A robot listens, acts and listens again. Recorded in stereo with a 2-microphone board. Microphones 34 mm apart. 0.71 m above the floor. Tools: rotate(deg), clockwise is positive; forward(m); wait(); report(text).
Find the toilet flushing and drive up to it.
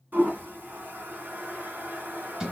rotate(70)
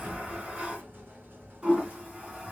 rotate(40)
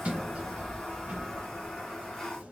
rotate(-10)
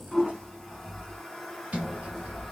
forward(1.0)
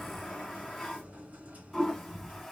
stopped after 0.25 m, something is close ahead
report("Something is in my way. I am facing the toilet flushing but have not reached it.")